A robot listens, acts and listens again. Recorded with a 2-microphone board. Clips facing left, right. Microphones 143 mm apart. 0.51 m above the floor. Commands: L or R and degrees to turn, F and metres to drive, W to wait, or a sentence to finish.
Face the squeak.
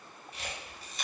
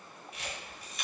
W
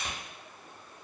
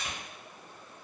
W
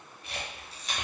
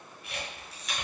I can't make out a squeak to turn to.